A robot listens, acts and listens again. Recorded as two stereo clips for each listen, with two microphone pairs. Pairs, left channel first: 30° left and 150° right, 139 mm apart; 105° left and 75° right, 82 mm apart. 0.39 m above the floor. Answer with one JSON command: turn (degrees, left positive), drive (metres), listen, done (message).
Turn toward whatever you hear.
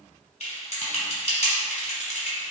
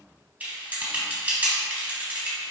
{"done": "Facing the typing on a keyboard."}